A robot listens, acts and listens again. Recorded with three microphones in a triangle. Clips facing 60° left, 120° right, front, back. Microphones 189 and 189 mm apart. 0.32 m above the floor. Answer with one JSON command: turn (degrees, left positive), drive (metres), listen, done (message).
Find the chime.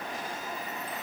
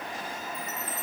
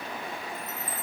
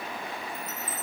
{"turn": -130}
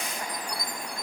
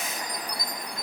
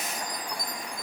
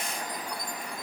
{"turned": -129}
{"done": "Found it: a chime, straight ahead."}